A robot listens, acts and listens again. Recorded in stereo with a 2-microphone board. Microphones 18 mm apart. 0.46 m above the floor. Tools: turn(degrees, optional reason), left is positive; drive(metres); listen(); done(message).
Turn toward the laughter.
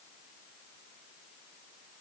listen()
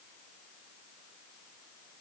listen()
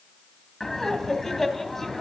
turn(degrees=30)
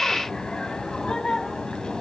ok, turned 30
turn(degrees=135, reason="So it is at 135° left.")
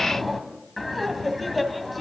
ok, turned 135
done("Found it: laughter, straight ahead, 2 to 4 m away.")